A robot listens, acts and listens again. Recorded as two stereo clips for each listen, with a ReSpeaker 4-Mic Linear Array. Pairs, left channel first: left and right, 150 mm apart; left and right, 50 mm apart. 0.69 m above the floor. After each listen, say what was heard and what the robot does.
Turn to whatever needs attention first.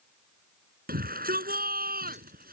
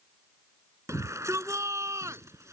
Turn 90° right.
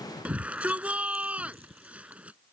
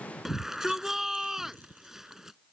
So it is at 10° right. Turn 10° right.
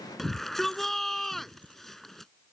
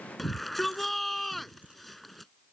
Facing the shout.